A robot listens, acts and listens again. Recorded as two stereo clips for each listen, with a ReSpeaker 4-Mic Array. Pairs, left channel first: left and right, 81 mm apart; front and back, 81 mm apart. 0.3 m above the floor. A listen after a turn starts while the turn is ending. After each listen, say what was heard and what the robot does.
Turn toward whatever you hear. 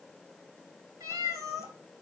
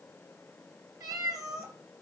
The cat meowing: 135° right. Turn 135° right.
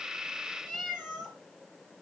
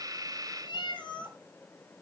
Found it: a cat meowing, straight ahead, 2 to 4 m away.